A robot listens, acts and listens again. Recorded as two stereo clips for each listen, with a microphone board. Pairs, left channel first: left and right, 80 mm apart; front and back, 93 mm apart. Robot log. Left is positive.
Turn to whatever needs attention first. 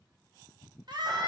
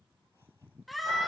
note: The scream: 90° right.
cmd yaw -90
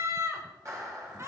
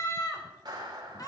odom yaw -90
note: The scream is now 45° right.
cmd yaw -45
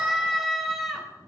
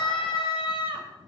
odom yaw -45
end: Found it: a scream, straight ahead.